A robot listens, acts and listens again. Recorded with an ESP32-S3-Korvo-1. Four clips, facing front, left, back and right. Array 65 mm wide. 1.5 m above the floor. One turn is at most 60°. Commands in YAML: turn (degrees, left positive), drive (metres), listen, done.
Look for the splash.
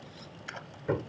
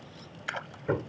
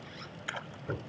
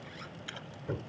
turn: 60
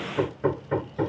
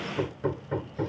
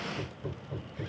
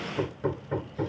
turn: 45
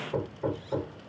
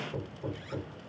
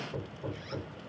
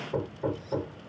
done: "Facing where the splash came from. I can't hear it now."